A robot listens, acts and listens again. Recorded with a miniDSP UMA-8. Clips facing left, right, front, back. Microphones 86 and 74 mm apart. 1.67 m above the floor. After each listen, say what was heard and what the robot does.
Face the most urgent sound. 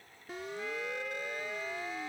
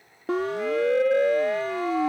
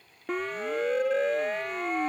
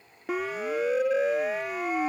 The siren: 95° right. Turn 95° right.
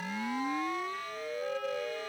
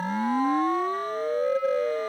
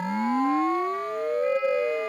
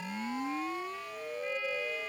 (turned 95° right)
The siren is now 40° right. Turn 40° right.
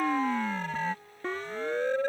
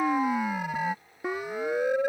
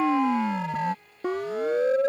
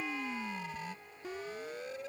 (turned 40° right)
The siren is now 10° right. Turn 10° right.
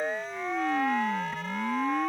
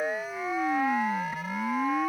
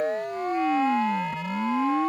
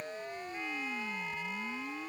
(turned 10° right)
Facing the siren.